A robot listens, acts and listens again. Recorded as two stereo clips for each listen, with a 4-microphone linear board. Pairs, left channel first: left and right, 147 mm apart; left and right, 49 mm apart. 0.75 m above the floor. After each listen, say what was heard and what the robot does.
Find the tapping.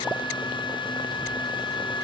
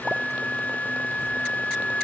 Keep listening.
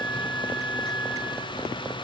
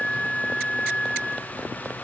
Keep listening.
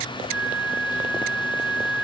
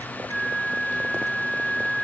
I can't make out tapping to turn to.